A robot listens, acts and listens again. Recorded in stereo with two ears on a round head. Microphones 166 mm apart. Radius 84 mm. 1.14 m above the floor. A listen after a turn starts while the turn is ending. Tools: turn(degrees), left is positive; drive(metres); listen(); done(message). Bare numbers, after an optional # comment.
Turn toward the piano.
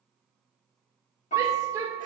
# The piano: about 40° left or 140° left.
turn(40)
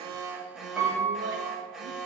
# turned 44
done("Found it: a piano, straight ahead.")